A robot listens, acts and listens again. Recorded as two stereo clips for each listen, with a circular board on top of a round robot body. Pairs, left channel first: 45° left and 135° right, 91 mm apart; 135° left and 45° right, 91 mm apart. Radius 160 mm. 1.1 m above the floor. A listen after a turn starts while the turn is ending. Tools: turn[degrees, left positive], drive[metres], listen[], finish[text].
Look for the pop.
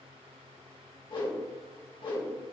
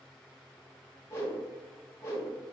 Action: listen[]
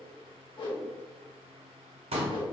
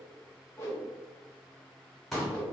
Thought: The pop: 135° right.
Action: turn[-135]
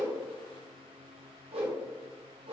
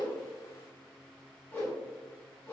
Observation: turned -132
Action: finish[Facing where the pop came from. I can't hear it now.]